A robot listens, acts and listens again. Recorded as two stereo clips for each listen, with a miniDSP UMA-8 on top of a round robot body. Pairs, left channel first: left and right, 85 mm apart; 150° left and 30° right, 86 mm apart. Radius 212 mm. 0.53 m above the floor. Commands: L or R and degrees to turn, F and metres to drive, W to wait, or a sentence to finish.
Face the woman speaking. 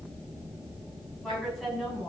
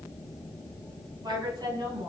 Facing the woman speaking.